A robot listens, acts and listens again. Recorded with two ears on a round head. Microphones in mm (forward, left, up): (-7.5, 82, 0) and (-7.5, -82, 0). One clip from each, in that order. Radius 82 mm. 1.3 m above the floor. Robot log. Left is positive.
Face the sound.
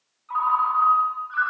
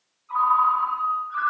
cmd yaw +90
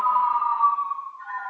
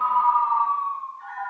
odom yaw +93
note: So it is at 10° right.
cmd yaw -10
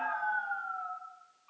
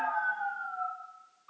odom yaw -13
end: Found it: a ringtone, straight ahead, 1 to 2 m away.